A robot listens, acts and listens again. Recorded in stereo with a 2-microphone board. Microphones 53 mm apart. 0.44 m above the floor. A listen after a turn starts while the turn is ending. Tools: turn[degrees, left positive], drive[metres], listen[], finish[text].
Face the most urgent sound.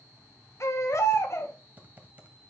Thought: The baby crying: about 55° left or 125° left.
Action: turn[55]
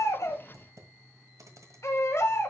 Thought: So it is at 65° left.
Action: turn[65]
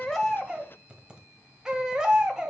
Thought: The baby crying is now 15° right.
Action: turn[-15]
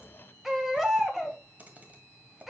Action: finish[Found it: a baby crying, straight ahead.]